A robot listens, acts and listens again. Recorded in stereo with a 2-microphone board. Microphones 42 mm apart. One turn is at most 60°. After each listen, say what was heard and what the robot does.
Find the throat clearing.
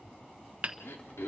Turn 60° left.
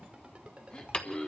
So it is at 25° left. Turn 25° left.
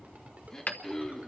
The throat clearing is now 15° left. Turn 15° left.
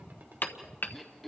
Facing the throat clearing, 2 to 4 m away.